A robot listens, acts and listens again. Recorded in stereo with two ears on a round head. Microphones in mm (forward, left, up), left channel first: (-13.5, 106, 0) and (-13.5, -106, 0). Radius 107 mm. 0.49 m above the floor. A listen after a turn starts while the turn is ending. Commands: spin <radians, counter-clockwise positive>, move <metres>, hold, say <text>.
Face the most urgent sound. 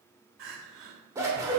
spin -0.96
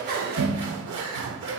hold
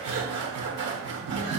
hold
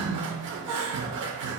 spin -0.52
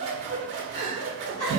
spin 0.35
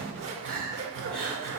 say Found it: crying, straight ahead.